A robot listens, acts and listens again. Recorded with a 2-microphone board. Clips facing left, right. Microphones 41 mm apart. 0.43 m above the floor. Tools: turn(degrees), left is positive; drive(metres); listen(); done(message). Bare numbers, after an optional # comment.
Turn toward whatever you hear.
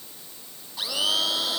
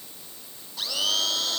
turn(30)
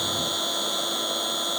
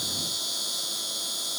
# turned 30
# So it is at 140° left.
turn(140)
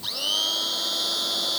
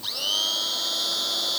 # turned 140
done("Found it: a blender, straight ahead.")